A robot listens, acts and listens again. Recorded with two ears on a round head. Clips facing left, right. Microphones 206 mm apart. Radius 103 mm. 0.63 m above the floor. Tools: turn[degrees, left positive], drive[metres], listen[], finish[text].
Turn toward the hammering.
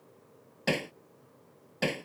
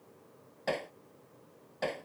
Thought: The hammering: about 45° left or 135° left.
Action: turn[45]
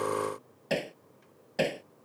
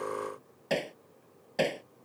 Action: finish[Facing the hammering.]